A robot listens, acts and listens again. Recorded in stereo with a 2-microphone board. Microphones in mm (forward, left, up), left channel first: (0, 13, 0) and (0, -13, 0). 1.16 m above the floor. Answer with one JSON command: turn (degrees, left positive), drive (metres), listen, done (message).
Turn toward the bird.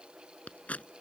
{"listen": true}
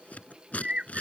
{"turn": -50}
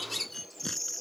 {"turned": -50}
{"done": "Facing the bird."}